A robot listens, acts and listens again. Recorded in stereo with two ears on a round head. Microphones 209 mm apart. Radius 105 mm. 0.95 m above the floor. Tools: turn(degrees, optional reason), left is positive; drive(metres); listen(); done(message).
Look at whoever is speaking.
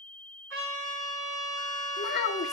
turn(degrees=40, reason="The child speaking: about 40° left or 140° left.")
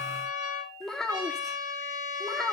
done("Facing the child speaking.")